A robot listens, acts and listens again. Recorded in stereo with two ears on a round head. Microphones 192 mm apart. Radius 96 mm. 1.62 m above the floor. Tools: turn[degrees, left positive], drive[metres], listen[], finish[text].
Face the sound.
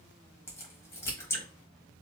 Action: turn[30]
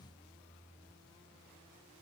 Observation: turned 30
Action: listen[]
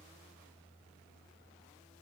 Action: finish[I heard a crack, but can't make it out now. It was about 15° right or 135° left.]